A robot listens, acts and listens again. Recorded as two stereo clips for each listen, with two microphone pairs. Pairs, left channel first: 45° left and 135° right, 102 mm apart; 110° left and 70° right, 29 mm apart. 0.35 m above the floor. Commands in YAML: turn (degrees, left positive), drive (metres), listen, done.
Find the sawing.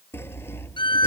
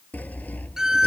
turn: 110
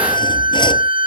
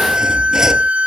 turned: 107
listen: true
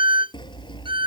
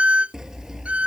done: "Found it: sawing, straight ahead."